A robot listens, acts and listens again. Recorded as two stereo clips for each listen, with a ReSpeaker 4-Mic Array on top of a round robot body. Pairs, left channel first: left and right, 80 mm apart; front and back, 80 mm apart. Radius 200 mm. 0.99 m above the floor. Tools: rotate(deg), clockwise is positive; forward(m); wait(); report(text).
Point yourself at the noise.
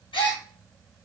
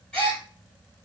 rotate(-80)
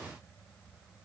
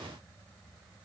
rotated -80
report("Facing where the gasp came from. I can't hear it now.")